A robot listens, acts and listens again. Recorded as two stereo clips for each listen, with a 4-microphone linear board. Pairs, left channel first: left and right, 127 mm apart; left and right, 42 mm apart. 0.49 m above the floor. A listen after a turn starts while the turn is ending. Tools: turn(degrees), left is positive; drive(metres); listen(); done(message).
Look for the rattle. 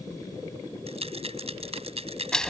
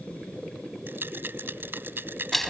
turn(degrees=-55)
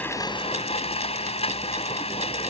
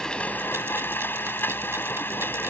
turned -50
listen()
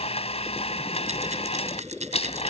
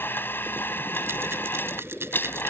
listen()
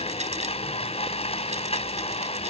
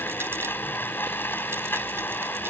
done("I heard a rattle, but can't make it out now. It was about 5° right or 75° right.")